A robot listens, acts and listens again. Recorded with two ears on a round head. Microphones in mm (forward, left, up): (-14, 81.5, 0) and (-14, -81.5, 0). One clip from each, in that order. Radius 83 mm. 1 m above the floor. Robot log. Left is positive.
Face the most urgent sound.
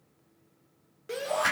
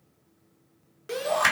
note: The shout: about 20° right or 160° right.
cmd yaw -20
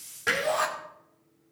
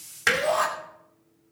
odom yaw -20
end: Facing the shout, 2 to 4 m away.